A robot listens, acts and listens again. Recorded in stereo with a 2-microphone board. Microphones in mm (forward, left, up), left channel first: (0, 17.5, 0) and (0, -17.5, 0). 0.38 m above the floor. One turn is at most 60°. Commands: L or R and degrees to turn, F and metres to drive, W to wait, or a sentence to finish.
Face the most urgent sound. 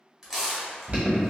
R50
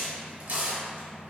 W
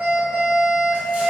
R60
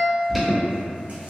Found it: an alarm, straight ahead, 1 to 2 m away.